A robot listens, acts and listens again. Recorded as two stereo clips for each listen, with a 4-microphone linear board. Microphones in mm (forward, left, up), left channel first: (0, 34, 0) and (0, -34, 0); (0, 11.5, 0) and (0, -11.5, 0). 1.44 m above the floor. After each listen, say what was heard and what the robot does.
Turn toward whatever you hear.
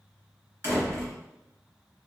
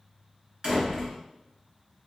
The door slam: about 40° right or 140° right. Turn 40° right.
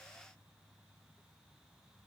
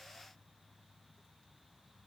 Keep listening.
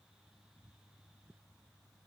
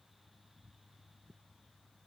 I heard a door slam, but can't make it out now. It was about straight ahead or 100° right.